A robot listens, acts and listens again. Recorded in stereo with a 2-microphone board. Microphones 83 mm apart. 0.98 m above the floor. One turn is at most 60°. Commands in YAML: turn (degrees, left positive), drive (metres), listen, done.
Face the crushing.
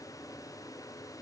listen: true
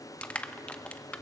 turn: 15
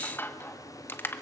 turn: 60
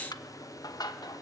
turn: 60
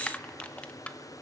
turn: 20
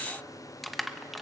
done: "Facing the crushing."